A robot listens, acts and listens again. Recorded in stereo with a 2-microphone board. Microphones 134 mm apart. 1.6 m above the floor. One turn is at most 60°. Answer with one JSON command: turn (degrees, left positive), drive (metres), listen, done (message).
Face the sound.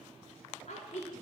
{"turn": 60}
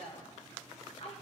{"turn": 50}
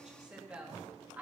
{"turn": -10}
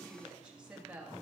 {"turn": -10}
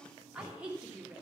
{"turn": -10}
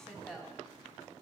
{"done": "Found it: a woman speaking, straight ahead, 2 to 4 m away."}